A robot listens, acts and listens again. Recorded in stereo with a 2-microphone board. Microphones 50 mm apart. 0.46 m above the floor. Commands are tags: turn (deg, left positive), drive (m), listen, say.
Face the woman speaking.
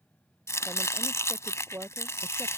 <turn deg="-50"/>
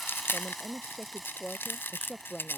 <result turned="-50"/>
<say>Facing the woman speaking.</say>